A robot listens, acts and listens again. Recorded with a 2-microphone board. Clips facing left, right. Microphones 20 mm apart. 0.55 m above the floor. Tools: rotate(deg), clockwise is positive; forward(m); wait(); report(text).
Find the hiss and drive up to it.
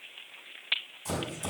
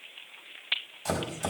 wait()
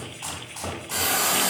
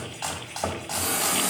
rotate(-60)
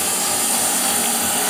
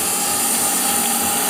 forward(1.0)
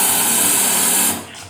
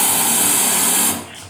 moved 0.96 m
rotate(10)
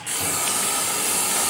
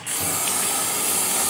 forward(1.0)
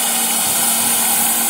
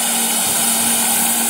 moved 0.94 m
rotate(10)
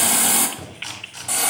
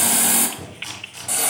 forward(1.0)
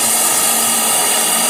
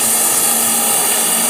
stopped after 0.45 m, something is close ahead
report("I am next to the hiss.")